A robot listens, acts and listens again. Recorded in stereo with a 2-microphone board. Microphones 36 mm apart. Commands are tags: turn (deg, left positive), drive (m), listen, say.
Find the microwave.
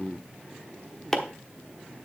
<listen/>
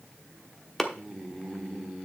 <listen/>
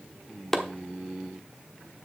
<say>I can't make out a microwave, only chopping.</say>